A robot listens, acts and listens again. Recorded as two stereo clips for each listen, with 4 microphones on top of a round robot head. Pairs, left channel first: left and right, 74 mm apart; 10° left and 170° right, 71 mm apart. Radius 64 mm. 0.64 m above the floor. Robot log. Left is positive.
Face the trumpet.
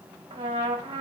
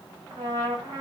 note: The trumpet: 115° right.
cmd yaw -115
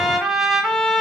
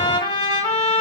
end: Facing the trumpet, 1 to 2 m away.